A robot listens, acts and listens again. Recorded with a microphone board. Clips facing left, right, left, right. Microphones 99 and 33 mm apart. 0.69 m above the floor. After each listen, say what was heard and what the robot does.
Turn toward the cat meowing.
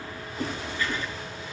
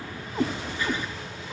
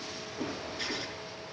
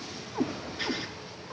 The cat meowing: about 55° right or 125° right. Turn 55° right.
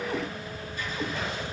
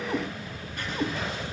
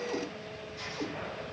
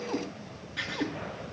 So it is at 25° right. Turn 25° right.
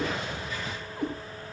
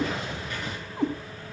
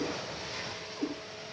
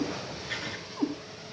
The cat meowing is now 25° right. Turn 25° right.
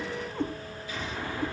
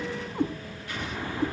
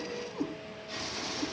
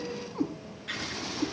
The cat meowing is now 20° right. Turn 20° right.
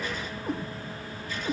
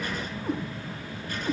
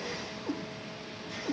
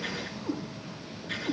Facing the cat meowing, 2 to 4 m away.